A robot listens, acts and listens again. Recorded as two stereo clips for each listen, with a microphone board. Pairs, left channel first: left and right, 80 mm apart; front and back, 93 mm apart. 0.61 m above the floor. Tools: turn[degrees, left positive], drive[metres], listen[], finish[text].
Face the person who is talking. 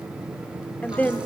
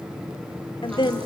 Thought: The woman speaking: 20° left.
Action: turn[20]
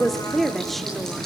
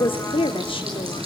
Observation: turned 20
Action: finish[Found it: a woman speaking, straight ahead, 1 to 2 m away.]